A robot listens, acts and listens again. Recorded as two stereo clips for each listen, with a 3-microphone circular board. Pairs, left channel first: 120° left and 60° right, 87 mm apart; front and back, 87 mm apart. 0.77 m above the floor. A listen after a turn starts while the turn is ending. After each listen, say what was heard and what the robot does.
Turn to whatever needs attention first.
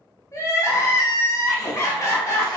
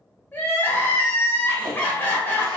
The crying: 65° left. Turn 65° left.
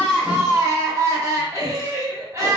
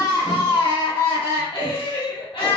Found it: crying, straight ahead.